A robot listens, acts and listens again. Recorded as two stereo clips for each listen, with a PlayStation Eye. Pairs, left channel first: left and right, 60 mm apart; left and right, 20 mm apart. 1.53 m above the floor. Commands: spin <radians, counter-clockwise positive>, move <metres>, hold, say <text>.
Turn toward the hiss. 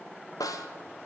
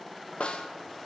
hold
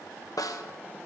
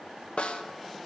hold
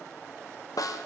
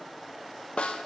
say I can't make out a hiss, only a snare drum.